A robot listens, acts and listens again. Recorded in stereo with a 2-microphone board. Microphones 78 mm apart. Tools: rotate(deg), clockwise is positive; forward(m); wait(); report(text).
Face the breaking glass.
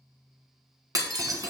rotate(55)
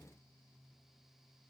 wait()
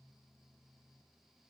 report("I heard breaking glass, but can't make it out now. It was about straight ahead or 70° right.")